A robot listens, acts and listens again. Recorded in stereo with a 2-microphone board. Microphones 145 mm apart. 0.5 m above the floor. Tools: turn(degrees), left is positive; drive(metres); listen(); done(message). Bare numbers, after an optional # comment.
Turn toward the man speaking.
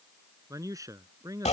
# The man speaking: about 25° right or 155° right.
turn(-25)
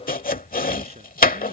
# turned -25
listen()
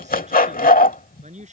# So it is at 125° right.
turn(-125)
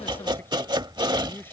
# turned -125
listen()
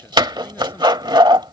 listen()
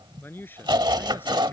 # The man speaking is now 15° left.
turn(15)
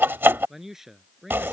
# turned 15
done("Facing the man speaking.")